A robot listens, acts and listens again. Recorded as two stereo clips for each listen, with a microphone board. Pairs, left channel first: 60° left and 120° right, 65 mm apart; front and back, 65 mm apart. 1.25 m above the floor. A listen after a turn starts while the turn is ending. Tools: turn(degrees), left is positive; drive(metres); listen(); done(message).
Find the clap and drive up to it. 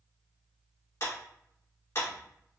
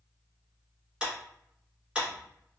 turn(degrees=105)
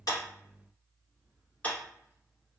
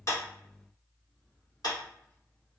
turn(degrees=-10)
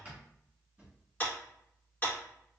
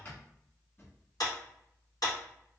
drive(metres=1.0)
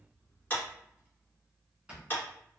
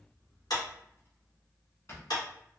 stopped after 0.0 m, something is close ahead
done("Something is in my way. I am facing the clap but have not reached it.")